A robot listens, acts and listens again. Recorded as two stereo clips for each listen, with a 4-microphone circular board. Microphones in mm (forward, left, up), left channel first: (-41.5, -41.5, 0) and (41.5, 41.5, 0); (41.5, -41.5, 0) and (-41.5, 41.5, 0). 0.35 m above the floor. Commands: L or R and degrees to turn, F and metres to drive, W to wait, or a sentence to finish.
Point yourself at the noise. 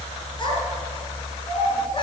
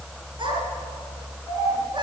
L180
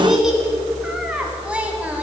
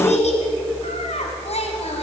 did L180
R30
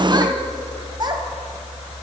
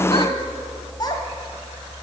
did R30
Facing the child speaking.